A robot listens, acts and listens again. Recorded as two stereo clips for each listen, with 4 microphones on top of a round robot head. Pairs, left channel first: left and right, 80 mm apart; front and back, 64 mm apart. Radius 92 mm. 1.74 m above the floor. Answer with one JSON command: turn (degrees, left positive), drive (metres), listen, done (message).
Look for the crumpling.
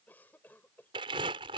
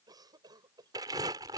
{"turn": -130}
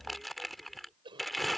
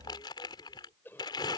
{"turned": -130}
{"done": "Facing the crumpling."}